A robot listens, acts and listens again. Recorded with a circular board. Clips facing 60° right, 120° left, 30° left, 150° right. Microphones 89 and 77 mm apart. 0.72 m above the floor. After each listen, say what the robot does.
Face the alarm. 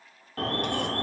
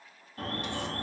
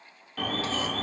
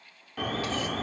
Turn 70° right.
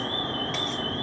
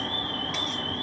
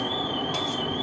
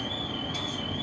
Facing the alarm.